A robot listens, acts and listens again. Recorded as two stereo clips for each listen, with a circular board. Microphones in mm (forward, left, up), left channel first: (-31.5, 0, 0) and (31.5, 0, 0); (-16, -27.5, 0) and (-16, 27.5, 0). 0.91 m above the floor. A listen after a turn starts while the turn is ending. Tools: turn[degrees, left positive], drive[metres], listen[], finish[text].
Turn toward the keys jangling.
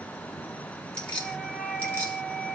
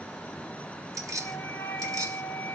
Thought: The keys jangling: 115° left.
Action: turn[115]
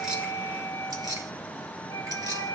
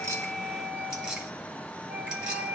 Thought: The keys jangling is now 15° left.
Action: turn[15]
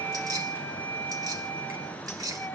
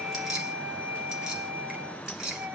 Thought: The keys jangling is now 10° left.
Action: turn[10]
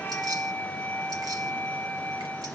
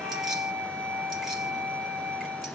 Action: listen[]
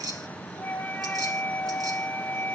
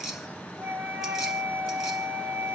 Action: finish[Found it: keys jangling, straight ahead, 2 to 4 m away.]